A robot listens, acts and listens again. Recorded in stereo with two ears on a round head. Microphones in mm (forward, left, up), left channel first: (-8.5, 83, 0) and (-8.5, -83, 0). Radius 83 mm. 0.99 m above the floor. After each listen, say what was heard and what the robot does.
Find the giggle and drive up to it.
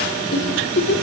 The giggle: about 65° left or 115° left. Turn 65° left.
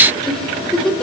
Drive 1.0 m forward.
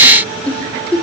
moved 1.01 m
Drive 1.0 m forward.
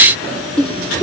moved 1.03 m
Drive 1.0 m forward.
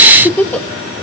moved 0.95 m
The giggle is now 10° left. Turn 10° left.
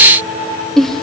Drive 1.0 m forward.
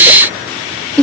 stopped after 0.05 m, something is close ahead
Arrived at the giggle, straight ahead.